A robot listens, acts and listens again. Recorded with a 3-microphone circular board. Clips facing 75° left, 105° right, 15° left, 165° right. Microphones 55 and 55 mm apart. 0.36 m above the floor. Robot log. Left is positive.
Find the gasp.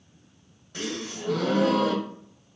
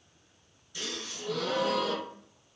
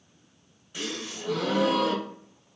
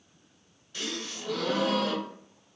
note: The gasp: 80° left.
cmd yaw +80
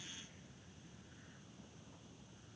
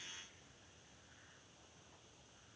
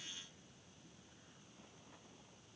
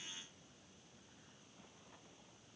end: Facing where the gasp came from. I can't hear it now.